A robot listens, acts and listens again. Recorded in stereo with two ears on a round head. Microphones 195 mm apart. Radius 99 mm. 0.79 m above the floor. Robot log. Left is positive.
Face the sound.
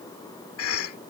cmd yaw +90
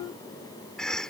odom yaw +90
end: Facing the cough.